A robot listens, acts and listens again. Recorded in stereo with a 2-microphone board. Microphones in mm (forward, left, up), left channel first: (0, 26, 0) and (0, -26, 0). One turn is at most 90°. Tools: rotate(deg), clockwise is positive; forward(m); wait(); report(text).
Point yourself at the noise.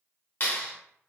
rotate(-45)
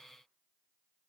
wait()
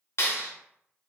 rotate(-75)
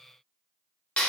rotate(-30)
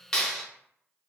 report("Facing the clap, under 1 m away.")